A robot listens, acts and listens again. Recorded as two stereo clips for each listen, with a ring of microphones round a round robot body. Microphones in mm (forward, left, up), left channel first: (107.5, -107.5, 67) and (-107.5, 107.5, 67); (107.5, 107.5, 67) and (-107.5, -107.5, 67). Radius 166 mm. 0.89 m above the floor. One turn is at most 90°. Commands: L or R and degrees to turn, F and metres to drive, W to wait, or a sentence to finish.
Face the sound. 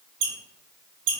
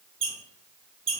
L90
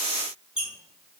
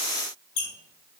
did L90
L45
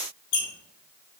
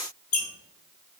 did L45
Found it: a squeak, straight ahead.